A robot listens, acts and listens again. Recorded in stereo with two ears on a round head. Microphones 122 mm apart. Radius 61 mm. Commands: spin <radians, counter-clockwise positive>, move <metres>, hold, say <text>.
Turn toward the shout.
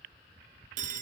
hold
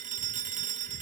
hold
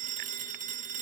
say I can't make out a shout to turn to.